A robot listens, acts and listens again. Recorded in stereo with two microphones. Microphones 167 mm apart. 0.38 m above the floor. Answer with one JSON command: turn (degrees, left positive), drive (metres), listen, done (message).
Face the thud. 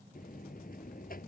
{"listen": true}
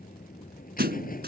{"turn": -90}
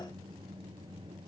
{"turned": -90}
{"done": "Facing where the thud came from. I can't hear it now."}